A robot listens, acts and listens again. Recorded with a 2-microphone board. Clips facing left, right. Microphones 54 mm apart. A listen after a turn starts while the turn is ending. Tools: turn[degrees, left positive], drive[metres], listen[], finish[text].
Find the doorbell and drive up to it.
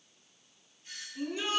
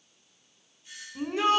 Thought: The doorbell: about 45° left or 135° left.
Action: turn[45]
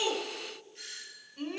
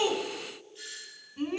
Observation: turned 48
Thought: So it is at 75° left.
Action: turn[75]
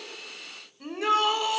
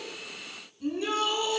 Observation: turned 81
Action: listen[]
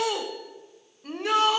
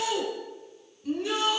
Action: listen[]
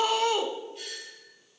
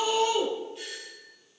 Action: drive[1.0]
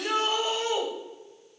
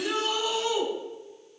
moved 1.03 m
Action: listen[]
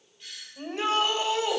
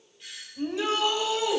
Action: drive[1.0]
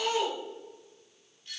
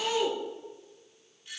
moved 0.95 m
Thought: The doorbell is now 20° right.
Action: turn[-20]
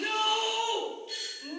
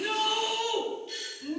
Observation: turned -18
Action: drive[1.0]
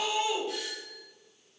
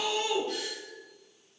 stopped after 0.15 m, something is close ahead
Action: finish[Arrived at the doorbell, straight ahead.]